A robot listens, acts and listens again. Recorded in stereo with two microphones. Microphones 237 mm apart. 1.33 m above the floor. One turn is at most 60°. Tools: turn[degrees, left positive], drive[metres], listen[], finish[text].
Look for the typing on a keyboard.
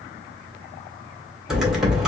Action: turn[-30]
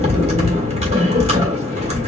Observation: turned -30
Thought: So it is at 145° right.
Action: turn[-60]
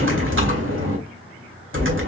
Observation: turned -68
Thought: The typing on a keyboard is now 80° right.
Action: turn[-60]
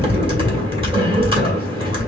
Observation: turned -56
Thought: The typing on a keyboard is now 25° right.
Action: turn[-25]
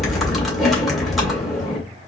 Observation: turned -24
Action: finish[Found it: typing on a keyboard, straight ahead, 1 to 2 m away.]